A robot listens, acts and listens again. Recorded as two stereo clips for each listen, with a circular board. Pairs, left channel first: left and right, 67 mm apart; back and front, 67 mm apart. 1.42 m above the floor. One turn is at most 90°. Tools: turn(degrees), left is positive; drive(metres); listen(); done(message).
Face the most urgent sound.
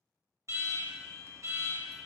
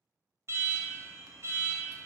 turn(degrees=-50)
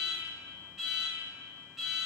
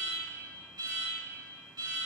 done("Facing the alarm, 1 to 2 m away.")